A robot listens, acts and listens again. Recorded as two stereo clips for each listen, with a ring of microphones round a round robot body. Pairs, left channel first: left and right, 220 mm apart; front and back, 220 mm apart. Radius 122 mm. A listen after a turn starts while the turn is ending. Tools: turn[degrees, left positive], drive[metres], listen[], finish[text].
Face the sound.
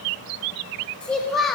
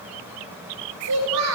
Thought: The child speaking: straight behind.
Action: turn[180]
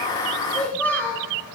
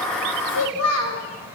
Thought: The child speaking is now 10° left.
Action: turn[10]
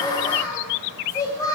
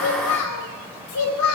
Thought: The child speaking is now 15° left.
Action: turn[15]
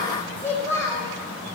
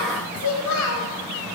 Thought: The child speaking is now 10° left.
Action: turn[10]
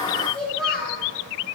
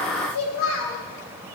Action: finish[Facing the child speaking, 2 to 4 m away.]